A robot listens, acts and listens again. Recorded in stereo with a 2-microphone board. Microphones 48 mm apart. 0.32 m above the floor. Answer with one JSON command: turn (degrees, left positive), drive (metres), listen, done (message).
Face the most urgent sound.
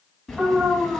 {"turn": -30}
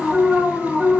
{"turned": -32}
{"done": "Facing the alarm."}